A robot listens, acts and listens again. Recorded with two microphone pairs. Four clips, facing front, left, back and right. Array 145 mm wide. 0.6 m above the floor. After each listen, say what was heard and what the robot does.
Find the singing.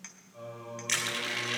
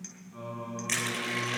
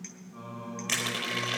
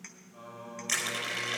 The singing: 135° left. Turn 135° left.
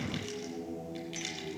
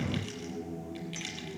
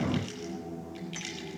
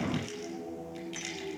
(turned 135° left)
Facing the singing, over 4 m away.